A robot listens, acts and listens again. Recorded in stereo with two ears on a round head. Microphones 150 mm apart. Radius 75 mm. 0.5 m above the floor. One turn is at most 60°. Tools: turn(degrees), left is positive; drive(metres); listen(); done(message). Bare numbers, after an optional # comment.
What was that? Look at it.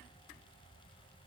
listen()
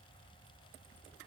listen()
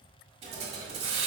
# The hiss: about 40° right or 140° right.
turn(-40)
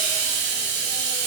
# So it is at 100° right.
turn(-60)
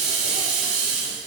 # The hiss is now 40° right.
turn(-40)
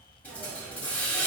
# The hiss is now 10° left.
turn(10)
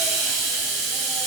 done("Facing the hiss.")